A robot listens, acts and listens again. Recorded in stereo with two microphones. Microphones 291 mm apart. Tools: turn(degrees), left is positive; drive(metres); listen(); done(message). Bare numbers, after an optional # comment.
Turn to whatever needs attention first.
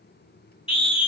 # The scream: about 20° left or 160° left.
turn(20)
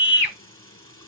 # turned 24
# So it is at 135° left.
turn(135)
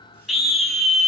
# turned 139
done("Facing the scream, 2 to 4 m away.")